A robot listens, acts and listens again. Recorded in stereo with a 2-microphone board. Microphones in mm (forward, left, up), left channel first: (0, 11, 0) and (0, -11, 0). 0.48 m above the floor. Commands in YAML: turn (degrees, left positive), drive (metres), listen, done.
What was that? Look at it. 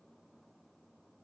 listen: true
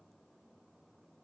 listen: true
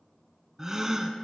turn: -35
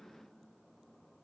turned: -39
listen: true
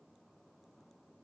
done: "I heard a gasp, but can't make it out now. It was about 5° left or 110° right."